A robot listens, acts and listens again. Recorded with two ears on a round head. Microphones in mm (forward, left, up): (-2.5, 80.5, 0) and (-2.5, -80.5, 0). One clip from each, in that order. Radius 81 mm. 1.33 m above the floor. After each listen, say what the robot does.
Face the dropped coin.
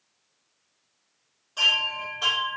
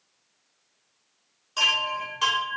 Keep listening.
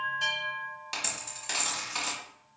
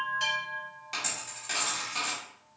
Turn 30° left.
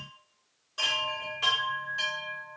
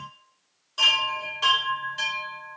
Keep listening.
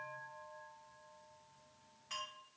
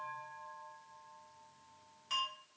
I heard a dropped coin, but can't make it out now. It was about straight ahead or 120° left.